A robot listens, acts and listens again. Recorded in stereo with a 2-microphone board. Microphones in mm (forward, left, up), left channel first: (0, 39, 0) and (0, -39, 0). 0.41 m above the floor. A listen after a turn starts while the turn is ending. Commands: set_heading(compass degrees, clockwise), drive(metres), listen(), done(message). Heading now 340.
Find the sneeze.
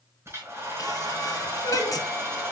set_heading(290)
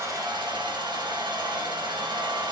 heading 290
listen()
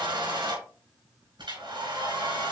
done("I heard a sneeze, but can't make it out now. It was about straight ahead or 80° left.")